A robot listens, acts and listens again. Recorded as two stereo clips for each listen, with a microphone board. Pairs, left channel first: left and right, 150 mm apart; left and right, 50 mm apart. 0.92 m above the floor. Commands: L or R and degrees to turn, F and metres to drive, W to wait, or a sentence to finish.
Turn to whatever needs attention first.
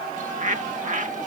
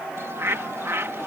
W
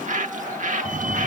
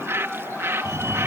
R60
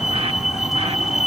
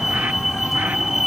Facing the fire alarm.